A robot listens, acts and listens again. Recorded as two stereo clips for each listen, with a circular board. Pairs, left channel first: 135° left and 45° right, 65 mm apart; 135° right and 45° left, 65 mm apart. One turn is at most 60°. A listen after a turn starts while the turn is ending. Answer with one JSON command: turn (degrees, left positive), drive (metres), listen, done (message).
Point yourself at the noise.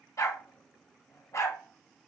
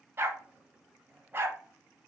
{"turn": 60}
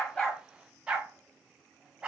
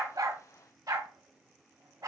{"turn": 30}
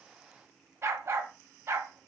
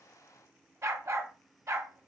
{"done": "Facing the dog barking, 1 to 2 m away."}